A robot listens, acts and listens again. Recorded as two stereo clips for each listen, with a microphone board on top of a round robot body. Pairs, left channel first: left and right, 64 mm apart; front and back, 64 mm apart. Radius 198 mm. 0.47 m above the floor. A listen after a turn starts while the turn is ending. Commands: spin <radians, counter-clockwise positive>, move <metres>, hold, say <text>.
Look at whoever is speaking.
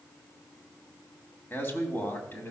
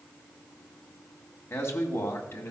spin 0.79
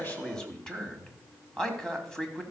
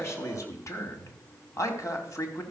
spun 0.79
spin 0.26
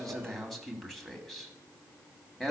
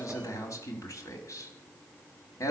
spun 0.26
say Found it: a man speaking, straight ahead.